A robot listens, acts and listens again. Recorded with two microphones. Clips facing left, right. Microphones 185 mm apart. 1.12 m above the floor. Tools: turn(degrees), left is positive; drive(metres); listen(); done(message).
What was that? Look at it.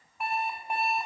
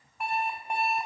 turn(degrees=30)
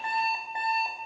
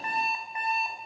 turn(degrees=150)
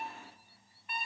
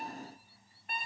turn(degrees=-50)
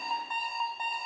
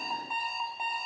done("Found it: an alarm clock, straight ahead, over 4 m away.")